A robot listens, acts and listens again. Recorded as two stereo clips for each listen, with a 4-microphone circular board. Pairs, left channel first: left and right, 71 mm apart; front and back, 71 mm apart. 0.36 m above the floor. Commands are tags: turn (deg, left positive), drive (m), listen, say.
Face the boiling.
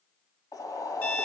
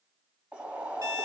<turn deg="110"/>
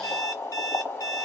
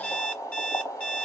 <turn deg="35"/>
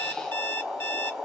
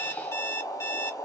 <say>Facing the boiling, 1 to 2 m away.</say>